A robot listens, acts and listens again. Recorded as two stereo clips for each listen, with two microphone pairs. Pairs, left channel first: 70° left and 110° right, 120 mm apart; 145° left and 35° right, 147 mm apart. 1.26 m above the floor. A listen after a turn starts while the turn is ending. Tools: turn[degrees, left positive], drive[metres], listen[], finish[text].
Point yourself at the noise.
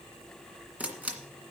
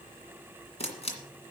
Thought: The camera shutter: 175° left.
Action: turn[175]
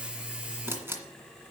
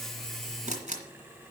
Thought: The camera shutter is now 40° right.
Action: turn[-40]
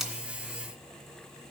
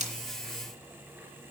Action: listen[]
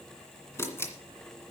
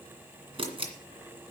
Thought: The camera shutter is now 10° left.
Action: turn[10]
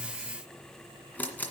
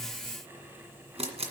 Action: finish[Facing the camera shutter.]